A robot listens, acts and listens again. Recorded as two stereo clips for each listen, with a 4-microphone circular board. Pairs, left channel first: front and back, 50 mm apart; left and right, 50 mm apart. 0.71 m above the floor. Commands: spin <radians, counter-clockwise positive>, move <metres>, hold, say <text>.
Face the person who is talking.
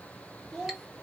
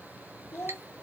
spin 1.75
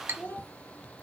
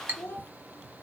spin 0.87
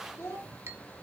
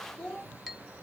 spin 0.17
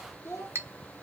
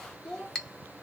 say Found it: a child speaking, straight ahead.